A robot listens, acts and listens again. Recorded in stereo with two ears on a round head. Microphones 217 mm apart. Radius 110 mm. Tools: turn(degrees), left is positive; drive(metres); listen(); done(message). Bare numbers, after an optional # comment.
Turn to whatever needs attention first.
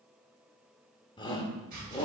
# The shout: about 20° left or 160° left.
turn(20)
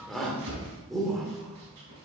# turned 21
done("Found it: a shout, straight ahead.")